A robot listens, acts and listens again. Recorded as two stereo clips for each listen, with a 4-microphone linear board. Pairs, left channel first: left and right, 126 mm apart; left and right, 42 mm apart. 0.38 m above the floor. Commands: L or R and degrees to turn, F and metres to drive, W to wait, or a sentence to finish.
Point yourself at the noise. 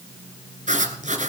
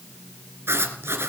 R90
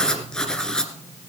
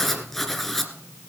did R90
Found it: writing, straight ahead, 1 to 2 m away.